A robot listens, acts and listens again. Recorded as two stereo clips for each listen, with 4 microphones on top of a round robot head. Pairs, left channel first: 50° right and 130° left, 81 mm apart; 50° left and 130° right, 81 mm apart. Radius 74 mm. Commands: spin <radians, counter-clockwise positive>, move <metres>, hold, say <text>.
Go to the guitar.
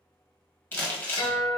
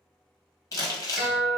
spin -0.79
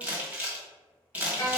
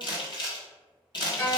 move 1.0
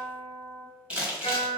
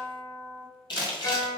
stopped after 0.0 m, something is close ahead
say Something is in my way. I am facing the guitar but have not reached it.